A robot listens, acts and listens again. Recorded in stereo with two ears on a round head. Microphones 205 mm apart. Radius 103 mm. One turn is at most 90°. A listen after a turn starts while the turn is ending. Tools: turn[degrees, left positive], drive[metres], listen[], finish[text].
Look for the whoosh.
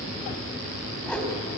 Action: turn[30]
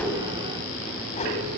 Thought: So it is at 145° left.
Action: turn[90]
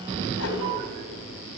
Thought: The whoosh is now 70° left.
Action: turn[70]
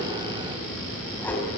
Thought: The whoosh is now 10° left.
Action: turn[10]
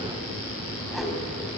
Action: finish[Found it: a whoosh, straight ahead, 2 to 4 m away.]